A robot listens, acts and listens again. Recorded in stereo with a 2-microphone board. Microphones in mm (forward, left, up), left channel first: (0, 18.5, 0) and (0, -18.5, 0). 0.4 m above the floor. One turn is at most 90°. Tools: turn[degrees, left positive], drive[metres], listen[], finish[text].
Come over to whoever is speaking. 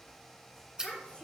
Thought: The child speaking: about 30° left or 150° left.
Action: turn[30]
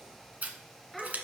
Action: drive[1.0]
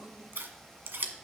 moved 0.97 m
Action: listen[]
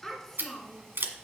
Thought: The child speaking is now 10° left.
Action: turn[10]
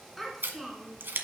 Action: drive[1.0]
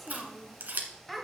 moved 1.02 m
Action: drive[1.0]
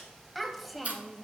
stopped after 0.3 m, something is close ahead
Action: finish[I am next to the child speaking.]